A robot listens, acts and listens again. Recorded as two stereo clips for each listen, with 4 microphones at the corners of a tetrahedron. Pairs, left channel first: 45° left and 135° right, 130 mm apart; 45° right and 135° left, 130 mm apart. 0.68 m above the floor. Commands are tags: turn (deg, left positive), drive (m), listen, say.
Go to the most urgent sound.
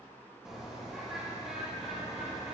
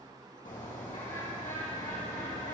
<listen/>
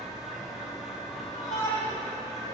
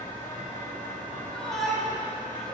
<turn deg="40"/>
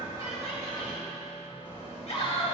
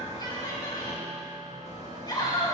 <turn deg="10"/>
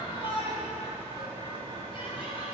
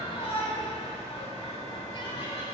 <drive m="1.0"/>
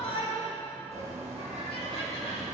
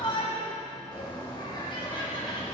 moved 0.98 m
<drive m="1.0"/>
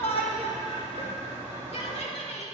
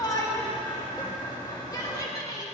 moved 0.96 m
<turn deg="15"/>
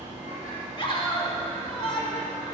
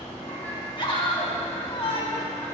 <drive m="1.0"/>
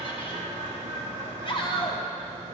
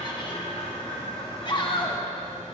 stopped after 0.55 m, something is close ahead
<say>Arrived at the shout, straight ahead.</say>